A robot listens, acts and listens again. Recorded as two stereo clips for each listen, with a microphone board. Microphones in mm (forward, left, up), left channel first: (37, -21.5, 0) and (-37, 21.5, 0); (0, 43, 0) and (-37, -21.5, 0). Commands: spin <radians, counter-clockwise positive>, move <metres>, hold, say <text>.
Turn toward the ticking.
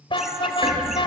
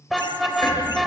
spin 2.01
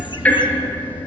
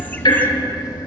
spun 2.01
spin 0.70
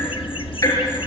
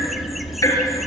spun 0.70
spin 0.35
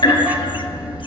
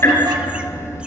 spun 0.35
say Found it: ticking, straight ahead, over 4 m away.